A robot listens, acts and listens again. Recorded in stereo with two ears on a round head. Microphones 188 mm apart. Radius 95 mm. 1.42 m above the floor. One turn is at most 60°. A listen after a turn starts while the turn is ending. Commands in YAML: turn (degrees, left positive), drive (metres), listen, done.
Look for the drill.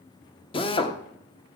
turn: 25
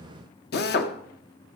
turn: 60
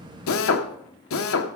turn: 60
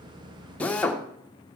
done: "Found it: a drill, straight ahead."